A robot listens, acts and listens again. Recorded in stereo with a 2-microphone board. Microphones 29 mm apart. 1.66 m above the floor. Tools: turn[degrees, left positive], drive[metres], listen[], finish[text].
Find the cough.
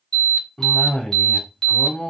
Thought: The cough: about 35° left or 145° left.
Action: turn[35]
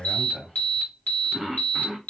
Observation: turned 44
Thought: So it is at 10° right.
Action: turn[-10]
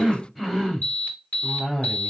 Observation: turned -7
Action: finish[Facing the cough, 1 to 2 m away.]